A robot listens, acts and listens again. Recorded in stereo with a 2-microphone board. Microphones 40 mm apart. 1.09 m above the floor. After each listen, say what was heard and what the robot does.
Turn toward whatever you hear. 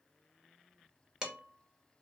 The dishes clattering: about 15° right or 165° right. Turn 15° right.
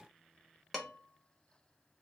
Found it: dishes clattering, straight ahead, under 1 m away.